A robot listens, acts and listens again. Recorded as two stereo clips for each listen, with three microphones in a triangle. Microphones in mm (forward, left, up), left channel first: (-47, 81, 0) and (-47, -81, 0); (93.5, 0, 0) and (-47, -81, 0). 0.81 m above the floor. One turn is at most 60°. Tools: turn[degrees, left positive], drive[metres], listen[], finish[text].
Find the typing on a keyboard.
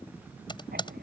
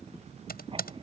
Thought: The typing on a keyboard: 30° left.
Action: turn[30]
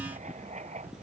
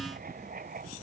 Action: listen[]
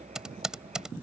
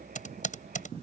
Action: finish[Found it: typing on a keyboard, straight ahead.]